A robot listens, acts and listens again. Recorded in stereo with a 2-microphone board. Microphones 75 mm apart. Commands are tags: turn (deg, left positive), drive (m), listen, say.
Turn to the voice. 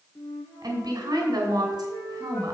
<turn deg="-65"/>
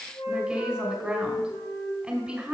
<turn deg="-15"/>
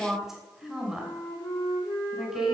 <say>Found it: a woman speaking, straight ahead.</say>